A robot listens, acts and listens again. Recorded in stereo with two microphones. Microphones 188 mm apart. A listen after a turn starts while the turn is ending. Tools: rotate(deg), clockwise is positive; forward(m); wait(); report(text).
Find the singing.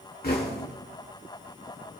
wait()
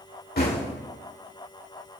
wait()
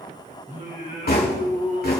rotate(45)
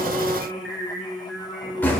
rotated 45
report("Facing the singing, 2 to 4 m away.")